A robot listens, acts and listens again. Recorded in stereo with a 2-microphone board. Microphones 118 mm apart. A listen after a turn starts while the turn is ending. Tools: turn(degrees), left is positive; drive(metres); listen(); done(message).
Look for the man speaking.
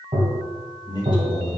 turn(degrees=40)
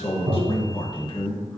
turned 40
turn(degrees=40)
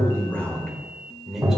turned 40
done("Found it: a man speaking, straight ahead, 1 to 2 m away.")